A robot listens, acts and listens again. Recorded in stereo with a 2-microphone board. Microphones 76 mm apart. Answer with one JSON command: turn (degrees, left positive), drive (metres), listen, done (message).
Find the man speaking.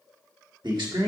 {"turn": -75}
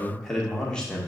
{"turn": 15}
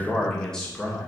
{"turn": 10}
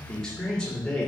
{"turn": 10}
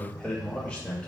{"turn": 15}
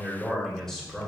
{"done": "Facing the man speaking, 2 to 4 m away."}